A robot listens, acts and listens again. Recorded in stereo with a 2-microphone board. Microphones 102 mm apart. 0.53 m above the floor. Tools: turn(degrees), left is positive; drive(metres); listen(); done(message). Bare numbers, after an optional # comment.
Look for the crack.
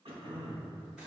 listen()
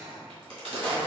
# The crack: about 60° right or 120° right.
turn(-60)
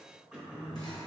listen()
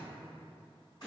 done("I heard a crack, but can't make it out now. It was about straight ahead or 60° right.")